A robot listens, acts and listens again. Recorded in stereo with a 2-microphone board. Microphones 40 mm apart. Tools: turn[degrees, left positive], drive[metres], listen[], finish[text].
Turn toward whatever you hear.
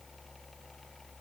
Action: listen[]
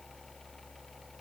Action: listen[]
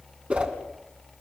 Thought: The whoosh: about 30° right or 150° right.
Action: turn[-30]
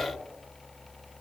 Action: listen[]
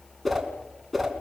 Action: finish[Found it: a whoosh, straight ahead.]